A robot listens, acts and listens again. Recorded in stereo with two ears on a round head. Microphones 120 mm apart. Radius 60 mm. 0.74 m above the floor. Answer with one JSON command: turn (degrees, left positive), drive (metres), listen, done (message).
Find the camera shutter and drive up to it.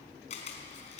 {"turn": 50}
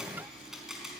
{"drive": 1.0}
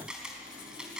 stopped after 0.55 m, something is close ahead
{"done": "Something is in my way. I am facing the camera shutter but have not reached it."}